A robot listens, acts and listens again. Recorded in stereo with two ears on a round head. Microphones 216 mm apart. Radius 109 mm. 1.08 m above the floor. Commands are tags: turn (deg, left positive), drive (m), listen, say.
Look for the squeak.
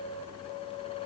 <listen/>
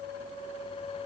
<listen/>
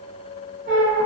<turn deg="-40"/>
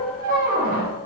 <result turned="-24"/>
<turn deg="-110"/>
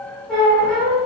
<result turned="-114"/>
<say>Facing the squeak, under 1 m away.</say>